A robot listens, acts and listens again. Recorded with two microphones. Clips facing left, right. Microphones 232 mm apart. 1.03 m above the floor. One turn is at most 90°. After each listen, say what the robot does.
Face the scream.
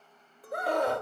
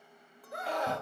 Turn 55° left.
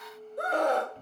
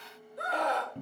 Turn 60° left.
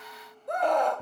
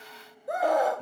Found it: a scream, straight ahead.